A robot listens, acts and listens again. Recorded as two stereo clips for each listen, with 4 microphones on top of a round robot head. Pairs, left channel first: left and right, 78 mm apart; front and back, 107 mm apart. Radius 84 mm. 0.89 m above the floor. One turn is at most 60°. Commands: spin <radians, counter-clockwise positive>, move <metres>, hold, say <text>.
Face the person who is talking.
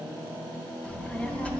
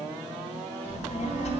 spin 0.35
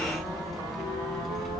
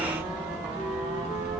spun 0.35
say Facing the child speaking.